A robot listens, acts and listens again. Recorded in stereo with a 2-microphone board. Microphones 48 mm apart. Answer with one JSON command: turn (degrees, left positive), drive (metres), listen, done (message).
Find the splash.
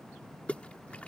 {"turn": 30}
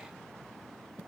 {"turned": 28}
{"listen": true}
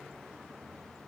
{"done": "I heard a splash, but can't make it out now. It was about straight ahead or 125° left."}